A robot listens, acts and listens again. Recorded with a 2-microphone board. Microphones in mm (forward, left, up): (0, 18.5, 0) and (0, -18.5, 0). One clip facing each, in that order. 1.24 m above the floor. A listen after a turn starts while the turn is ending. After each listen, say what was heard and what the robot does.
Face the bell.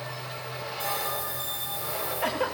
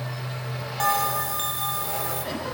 Turn 90° right.
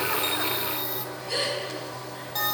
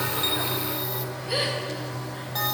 Facing the bell, 2 to 4 m away.